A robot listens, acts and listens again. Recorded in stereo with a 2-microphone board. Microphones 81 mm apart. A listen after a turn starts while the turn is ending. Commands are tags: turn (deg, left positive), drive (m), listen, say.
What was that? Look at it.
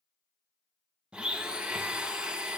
<turn deg="-30"/>
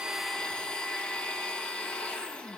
<turn deg="15"/>
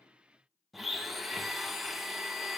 <say>Found it: a blender, straight ahead, under 1 m away.</say>